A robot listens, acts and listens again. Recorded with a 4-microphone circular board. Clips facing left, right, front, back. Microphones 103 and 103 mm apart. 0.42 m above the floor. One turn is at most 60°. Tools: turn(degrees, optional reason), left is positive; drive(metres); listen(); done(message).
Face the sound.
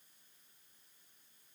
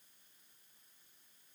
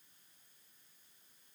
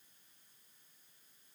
listen()
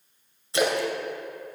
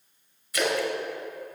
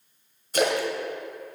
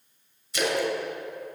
turn(degrees=30, reason="The splash: 30° left.")
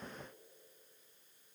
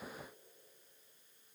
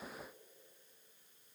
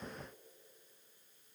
done("I heard a splash from this way, but can't make it out now.")